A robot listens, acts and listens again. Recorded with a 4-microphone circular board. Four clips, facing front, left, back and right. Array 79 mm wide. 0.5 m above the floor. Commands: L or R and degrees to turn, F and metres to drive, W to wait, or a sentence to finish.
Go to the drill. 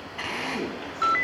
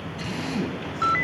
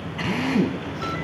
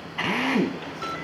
R90
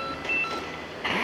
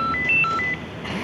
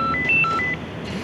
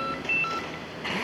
F1.0
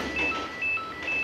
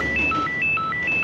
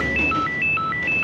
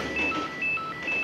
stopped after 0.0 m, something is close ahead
W
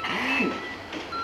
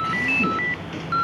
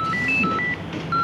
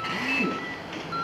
W
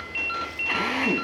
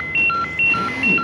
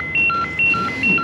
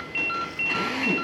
I heard a drill from this way, but can't make it out now. I did not reach it.